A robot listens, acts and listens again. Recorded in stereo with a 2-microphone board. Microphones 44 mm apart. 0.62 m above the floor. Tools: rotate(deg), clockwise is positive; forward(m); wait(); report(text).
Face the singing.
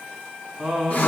rotate(15)
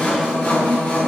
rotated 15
wait()
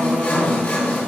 wait()
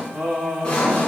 rotate(35)
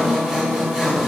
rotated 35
wait()
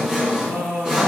rotate(110)
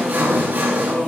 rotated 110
wait()
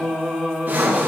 rotate(-15)
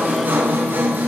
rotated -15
wait()
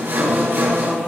report("Facing the singing.")